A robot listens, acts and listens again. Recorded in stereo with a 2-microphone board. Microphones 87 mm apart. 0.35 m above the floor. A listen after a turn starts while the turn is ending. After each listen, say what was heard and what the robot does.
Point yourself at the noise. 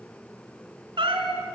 Turn 90° right.
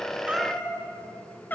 So it is at 20° left. Turn 20° left.
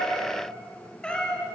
The cat meowing is now 10° left. Turn 10° left.
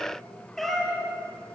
Facing the cat meowing.